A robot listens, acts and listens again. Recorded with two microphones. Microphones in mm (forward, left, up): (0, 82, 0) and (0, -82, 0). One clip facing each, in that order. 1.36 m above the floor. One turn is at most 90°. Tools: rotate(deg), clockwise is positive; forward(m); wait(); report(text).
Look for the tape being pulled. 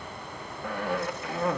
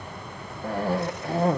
wait()
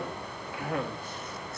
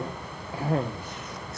wait()
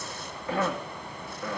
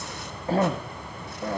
report("I can't make out tape being pulled, only a cough.")